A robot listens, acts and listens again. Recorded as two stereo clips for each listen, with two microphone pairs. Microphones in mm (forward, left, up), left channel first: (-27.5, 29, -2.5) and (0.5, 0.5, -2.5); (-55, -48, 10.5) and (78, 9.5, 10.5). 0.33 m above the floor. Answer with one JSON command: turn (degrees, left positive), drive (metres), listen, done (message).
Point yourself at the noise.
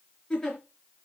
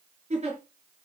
{"turn": 65}
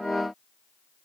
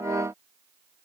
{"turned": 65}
{"listen": true}
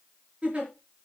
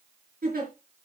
{"turn": 15}
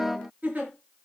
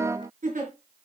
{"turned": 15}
{"done": "Facing the giggle, over 4 m away."}